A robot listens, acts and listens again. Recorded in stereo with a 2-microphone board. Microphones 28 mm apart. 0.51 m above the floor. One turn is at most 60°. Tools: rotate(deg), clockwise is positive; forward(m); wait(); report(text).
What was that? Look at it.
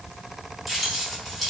rotate(-30)
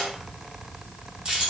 rotate(30)
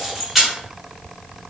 report("Found it: keys jangling, straight ahead.")